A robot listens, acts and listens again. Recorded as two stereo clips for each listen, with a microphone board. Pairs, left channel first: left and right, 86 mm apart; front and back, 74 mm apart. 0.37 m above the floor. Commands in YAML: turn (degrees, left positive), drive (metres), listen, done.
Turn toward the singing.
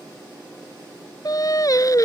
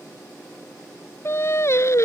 turn: 45
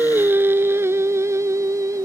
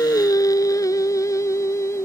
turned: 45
turn: -45
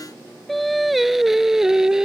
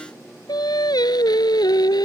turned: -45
turn: -10
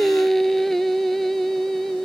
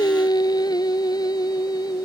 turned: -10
done: "Found it: singing, straight ahead."